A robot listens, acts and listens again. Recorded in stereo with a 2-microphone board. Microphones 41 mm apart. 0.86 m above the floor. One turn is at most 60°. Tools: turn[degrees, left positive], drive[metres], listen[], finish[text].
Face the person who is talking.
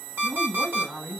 Thought: The woman speaking: about 70° right or 110° right.
Action: turn[-60]
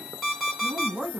Thought: So it is at 50° right.
Action: turn[-50]
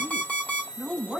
Thought: The woman speaking is now 15° right.
Action: turn[-15]
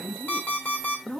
Action: finish[Facing the woman speaking, 2 to 4 m away.]